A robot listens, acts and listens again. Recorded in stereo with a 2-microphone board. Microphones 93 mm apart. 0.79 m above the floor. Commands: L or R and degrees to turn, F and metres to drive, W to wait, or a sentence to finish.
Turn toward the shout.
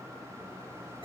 W
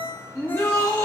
L35
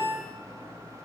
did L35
W
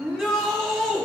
Found it: a shout, straight ahead.